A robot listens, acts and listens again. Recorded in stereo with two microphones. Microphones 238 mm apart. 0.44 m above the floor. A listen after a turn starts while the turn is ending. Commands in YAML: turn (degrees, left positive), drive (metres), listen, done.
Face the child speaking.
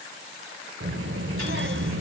turn: -50
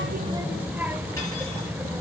turn: -10
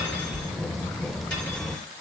done: "Facing the child speaking."